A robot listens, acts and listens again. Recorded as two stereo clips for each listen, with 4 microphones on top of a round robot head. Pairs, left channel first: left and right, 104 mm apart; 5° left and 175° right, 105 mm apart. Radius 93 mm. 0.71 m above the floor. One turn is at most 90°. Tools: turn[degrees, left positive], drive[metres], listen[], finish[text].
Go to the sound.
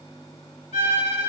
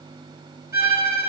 Thought: The violin: 130° left.
Action: turn[90]
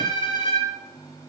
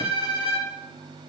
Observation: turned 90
Thought: The violin is now 55° left.
Action: turn[55]
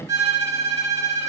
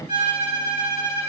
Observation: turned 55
Thought: The violin is now 25° right.
Action: turn[-25]
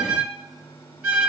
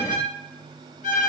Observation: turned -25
Thought: The violin is now 10° right.
Action: turn[-10]
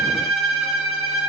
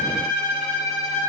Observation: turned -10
Action: drive[1.0]
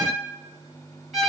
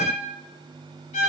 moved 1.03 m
Action: drive[1.0]
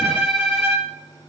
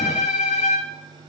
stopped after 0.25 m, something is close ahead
Action: finish[Arrived at the violin, straight ahead.]